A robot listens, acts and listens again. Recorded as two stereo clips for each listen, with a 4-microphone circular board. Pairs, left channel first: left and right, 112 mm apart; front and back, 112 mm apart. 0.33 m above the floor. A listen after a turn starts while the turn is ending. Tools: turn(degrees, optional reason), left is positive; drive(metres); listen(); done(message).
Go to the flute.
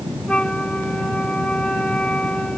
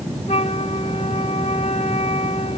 turn(degrees=10, reason="The flute: 10° left.")
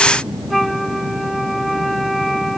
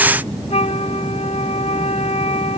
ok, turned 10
drive(metres=1.0)
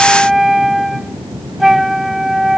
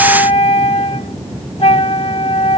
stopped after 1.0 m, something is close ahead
done("Arrived at the flute, straight ahead.")